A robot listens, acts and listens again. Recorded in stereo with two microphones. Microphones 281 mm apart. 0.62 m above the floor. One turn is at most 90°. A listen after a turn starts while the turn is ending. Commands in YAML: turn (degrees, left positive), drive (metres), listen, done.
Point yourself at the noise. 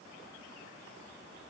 listen: true
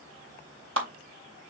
turn: -50
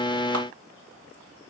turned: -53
listen: true
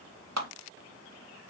turn: -75
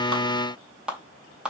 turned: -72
done: "Found it: a clap, straight ahead."